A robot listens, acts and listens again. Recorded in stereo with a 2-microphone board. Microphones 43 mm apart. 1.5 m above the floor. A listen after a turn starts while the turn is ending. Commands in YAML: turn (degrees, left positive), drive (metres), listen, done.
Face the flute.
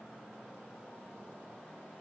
listen: true
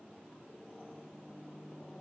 listen: true
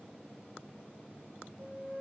turn: -20
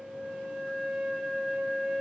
done: "Found it: a flute, straight ahead, 2 to 4 m away."